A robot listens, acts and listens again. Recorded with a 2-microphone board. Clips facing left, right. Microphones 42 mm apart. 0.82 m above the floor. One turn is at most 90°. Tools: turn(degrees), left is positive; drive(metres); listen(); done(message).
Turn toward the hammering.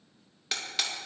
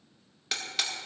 turn(degrees=30)
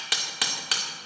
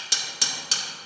turn(degrees=90)
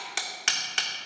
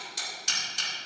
turn(degrees=75)
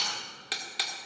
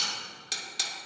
turn(degrees=25)
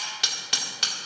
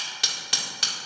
done("Facing the hammering, 1 to 2 m away.")